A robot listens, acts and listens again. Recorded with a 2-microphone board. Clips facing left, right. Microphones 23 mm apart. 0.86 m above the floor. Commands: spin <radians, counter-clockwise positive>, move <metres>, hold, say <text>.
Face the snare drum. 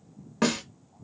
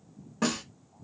spin 0.87
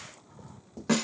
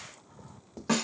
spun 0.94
say Found it: a snare drum, straight ahead, 1 to 2 m away.